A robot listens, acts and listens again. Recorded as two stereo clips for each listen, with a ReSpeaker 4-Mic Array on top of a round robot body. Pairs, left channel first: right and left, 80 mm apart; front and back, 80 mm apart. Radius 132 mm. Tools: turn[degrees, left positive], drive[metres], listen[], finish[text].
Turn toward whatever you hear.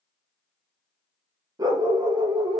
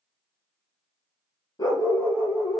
Thought: The dog barking: 55° left.
Action: turn[55]
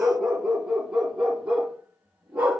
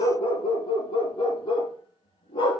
Thought: The dog barking is now 20° left.
Action: turn[20]
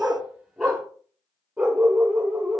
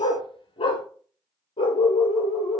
Thought: The dog barking is now 10° left.
Action: turn[10]
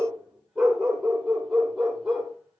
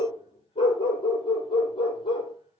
Action: finish[Found it: a dog barking, straight ahead, 2 to 4 m away.]